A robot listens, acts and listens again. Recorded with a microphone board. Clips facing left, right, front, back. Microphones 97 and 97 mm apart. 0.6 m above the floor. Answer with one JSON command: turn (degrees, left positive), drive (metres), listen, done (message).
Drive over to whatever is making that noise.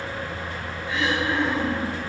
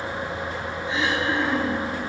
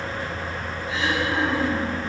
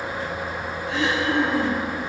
{"turn": -155}
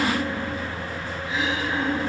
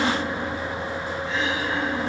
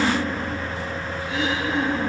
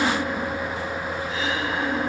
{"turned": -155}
{"turn": 10}
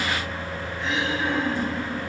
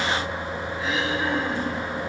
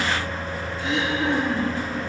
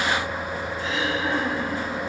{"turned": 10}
{"drive": 1.0}
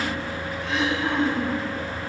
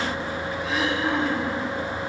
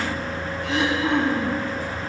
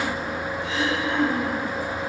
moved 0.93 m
{"drive": 1.0}
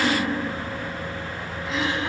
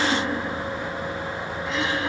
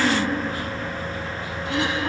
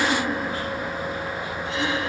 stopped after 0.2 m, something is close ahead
{"done": "Arrived at the throat clearing, straight ahead."}